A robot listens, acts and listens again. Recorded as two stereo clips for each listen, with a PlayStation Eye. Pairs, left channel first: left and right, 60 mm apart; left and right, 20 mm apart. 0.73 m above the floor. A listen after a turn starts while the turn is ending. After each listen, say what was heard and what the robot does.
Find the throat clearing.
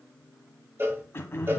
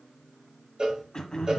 The throat clearing: about 45° left or 135° left. Turn 45° left.
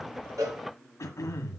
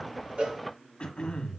So it is at 85° left. Turn 85° left.
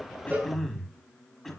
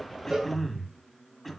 Facing the throat clearing.